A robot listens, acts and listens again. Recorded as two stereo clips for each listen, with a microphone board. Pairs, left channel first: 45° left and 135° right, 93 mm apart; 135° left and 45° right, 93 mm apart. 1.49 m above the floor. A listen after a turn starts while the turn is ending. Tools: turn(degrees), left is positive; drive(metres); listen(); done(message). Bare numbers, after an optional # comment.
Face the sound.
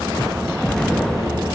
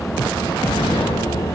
# The explosion: 130° left.
turn(130)
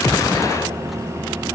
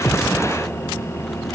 done("I heard an explosion from this way, but can't make it out now.")